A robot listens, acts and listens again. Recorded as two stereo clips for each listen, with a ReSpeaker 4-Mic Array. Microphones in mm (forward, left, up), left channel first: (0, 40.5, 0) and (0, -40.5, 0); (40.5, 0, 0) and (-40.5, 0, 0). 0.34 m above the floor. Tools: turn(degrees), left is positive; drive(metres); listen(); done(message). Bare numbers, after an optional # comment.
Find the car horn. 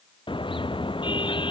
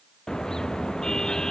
# The car horn: 85° left.
turn(85)
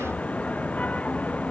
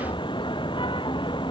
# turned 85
# The car horn is now 15° left.
turn(15)
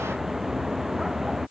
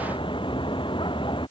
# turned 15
done("Facing the car horn.")